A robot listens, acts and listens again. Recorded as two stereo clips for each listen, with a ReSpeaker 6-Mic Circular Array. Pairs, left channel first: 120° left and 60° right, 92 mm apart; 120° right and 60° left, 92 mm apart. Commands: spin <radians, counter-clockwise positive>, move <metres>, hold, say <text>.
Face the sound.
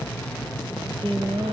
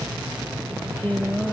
spin -0.87
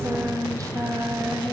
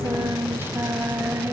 say Facing the singing, 2 to 4 m away.